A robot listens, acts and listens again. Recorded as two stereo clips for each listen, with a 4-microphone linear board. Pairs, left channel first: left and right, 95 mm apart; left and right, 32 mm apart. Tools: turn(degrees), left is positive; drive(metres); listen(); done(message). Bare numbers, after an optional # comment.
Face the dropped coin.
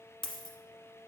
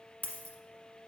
# The dropped coin: about 50° left or 130° left.
turn(50)
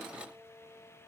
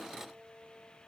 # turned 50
listen()
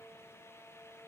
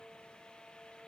done("I heard a dropped coin, but can't make it out now. It was about straight ahead or 80° left.")